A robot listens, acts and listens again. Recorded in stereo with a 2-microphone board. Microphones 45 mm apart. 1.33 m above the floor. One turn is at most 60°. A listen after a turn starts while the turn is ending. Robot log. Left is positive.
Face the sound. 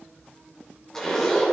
cmd yaw +30
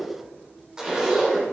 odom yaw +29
note: So it is at 20° right.
cmd yaw -20
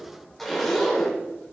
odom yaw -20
end: Facing the zipper, 2 to 4 m away.